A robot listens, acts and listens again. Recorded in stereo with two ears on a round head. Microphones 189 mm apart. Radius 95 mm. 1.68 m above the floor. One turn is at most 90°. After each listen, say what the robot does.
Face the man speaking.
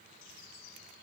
Keep listening.
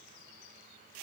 Keep listening.
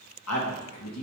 Turn 90° left.
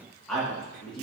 Found it: a man speaking, straight ahead, 2 to 4 m away.